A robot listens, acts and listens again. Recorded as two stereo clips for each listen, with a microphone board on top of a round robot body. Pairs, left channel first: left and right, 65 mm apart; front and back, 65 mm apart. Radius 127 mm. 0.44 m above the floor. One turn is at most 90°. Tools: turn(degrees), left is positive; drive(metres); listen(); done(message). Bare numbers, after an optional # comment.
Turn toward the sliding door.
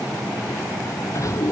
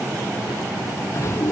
# The sliding door: 50° left.
turn(50)
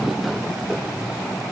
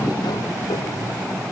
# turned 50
listen()
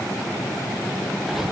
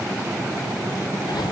listen()
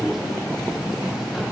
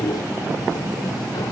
done("Found it: a sliding door, straight ahead.")